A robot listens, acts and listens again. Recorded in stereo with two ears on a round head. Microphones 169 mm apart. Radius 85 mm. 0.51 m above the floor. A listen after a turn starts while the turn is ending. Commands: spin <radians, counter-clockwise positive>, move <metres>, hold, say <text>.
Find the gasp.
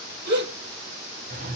spin -1.05
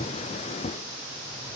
hold
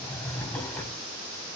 say I heard a gasp, but can't make it out now. It was about straight ahead or 60° right.